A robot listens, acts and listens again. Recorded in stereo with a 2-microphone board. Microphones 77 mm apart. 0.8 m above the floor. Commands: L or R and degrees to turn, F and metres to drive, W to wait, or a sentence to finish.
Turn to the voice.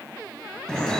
W
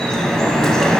W
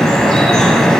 I can't make out anyone speaking, only dripping.